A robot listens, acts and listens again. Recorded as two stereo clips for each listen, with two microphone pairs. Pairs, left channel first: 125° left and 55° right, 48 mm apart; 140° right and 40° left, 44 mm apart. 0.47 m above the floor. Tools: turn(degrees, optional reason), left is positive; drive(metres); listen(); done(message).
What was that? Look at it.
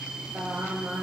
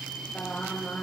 turn(degrees=-85, reason="The singing: 85° right.")
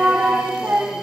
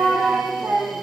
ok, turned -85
turn(degrees=-10, reason="The singing is now 10° right.")
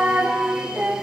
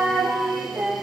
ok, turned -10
done("Facing the singing.")